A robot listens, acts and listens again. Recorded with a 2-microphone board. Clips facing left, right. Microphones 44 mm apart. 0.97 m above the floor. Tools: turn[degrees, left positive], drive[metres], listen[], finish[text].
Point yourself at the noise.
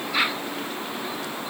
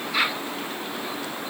Action: listen[]
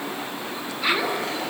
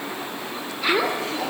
Action: turn[-90]
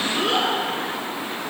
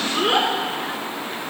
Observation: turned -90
Thought: So it is at 25° right.
Action: turn[-25]
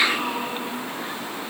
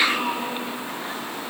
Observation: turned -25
Thought: The child speaking is now 10° right.
Action: turn[-10]
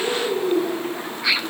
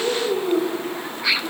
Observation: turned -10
Thought: The child speaking is now 15° right.
Action: turn[-15]
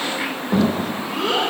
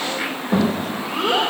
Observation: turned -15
Action: finish[Found it: a child speaking, straight ahead.]